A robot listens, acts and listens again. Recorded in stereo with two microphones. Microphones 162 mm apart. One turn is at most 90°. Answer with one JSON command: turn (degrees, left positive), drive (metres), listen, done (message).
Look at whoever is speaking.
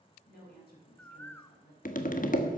{"turn": 90}
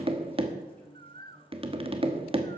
{"listen": true}
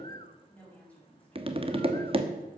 {"turn": 10}
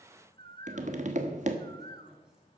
{"listen": true}
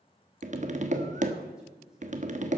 {"listen": true}
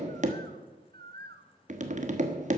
{"done": "Facing where the woman speaking came from. I can't hear it now."}